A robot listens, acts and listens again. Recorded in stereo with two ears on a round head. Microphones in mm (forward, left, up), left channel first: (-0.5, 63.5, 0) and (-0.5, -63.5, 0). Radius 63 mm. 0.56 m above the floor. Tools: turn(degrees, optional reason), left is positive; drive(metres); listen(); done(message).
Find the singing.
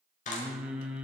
turn(degrees=-30)
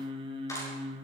turn(degrees=-145, reason="So it is at 145° right.")
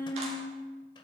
turn(degrees=15, reason="The singing is now 15° left.")
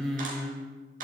done("Facing the singing, 2 to 4 m away.")